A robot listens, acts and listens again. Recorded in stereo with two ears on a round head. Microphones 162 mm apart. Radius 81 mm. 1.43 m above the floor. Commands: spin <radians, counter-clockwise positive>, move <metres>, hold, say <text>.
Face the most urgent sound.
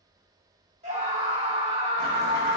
spin -0.70
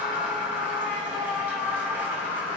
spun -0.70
say Found it: a scream, straight ahead.